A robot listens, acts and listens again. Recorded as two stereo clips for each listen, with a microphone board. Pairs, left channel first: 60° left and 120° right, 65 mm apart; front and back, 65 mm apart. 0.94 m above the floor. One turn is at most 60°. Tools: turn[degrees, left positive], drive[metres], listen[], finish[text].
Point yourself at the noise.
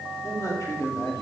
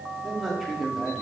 Thought: The man speaking: 95° left.
Action: turn[60]
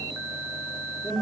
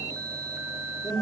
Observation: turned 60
Thought: The man speaking is now 25° left.
Action: turn[25]
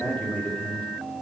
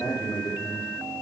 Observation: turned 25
Action: finish[Found it: a man speaking, straight ahead, 2 to 4 m away.]